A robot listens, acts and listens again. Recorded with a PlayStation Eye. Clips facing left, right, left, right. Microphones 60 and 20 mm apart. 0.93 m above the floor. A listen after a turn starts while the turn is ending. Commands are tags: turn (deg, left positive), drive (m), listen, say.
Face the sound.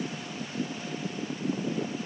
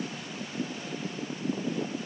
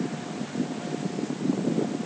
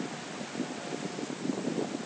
<listen/>
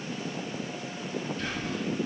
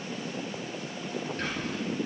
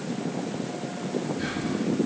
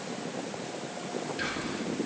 <turn deg="-55"/>
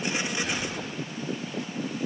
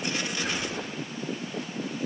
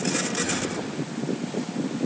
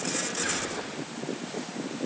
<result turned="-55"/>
<turn deg="-70"/>
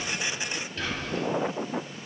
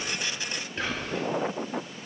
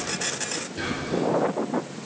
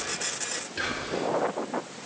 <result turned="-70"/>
<turn deg="-30"/>
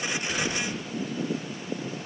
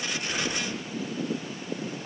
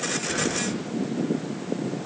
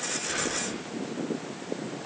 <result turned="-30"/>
<listen/>
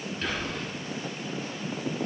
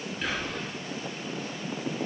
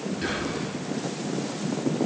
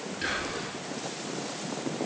<turn deg="-10"/>
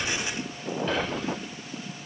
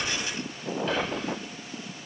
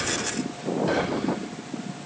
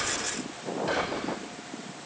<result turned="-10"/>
<say>Found it: whispering, straight ahead.</say>